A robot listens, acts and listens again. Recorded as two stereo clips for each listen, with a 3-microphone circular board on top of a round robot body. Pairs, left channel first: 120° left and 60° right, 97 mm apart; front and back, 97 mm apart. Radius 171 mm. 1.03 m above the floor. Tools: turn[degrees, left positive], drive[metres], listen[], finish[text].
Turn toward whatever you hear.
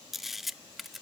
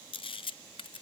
Thought: The camera shutter: 30° left.
Action: turn[30]
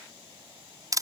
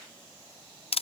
Action: finish[Found it: a camera shutter, straight ahead.]